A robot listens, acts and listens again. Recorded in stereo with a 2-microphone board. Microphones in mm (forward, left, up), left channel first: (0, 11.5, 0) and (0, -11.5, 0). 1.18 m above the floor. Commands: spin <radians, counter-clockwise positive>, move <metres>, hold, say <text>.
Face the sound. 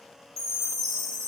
spin 0.52
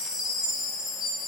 spin -0.52
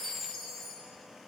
say Found it: a chime, straight ahead, 2 to 4 m away.